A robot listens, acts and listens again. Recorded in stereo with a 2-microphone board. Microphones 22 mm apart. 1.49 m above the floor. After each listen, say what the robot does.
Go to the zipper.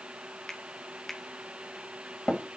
Keep listening.
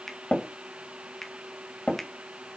Keep listening.
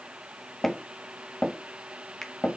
I can't make out a zipper, only tapping and a finger snap.